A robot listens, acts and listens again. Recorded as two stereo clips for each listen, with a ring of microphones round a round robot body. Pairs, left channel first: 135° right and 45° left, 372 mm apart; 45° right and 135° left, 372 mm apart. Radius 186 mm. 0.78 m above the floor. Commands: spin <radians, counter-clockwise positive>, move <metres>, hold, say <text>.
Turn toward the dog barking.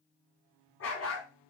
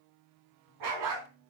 spin 2.97
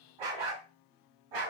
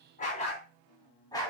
spin 0.61
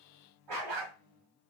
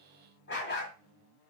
spin 0.35
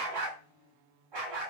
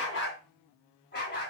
spin 0.35
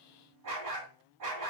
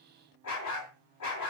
say Found it: a dog barking, straight ahead.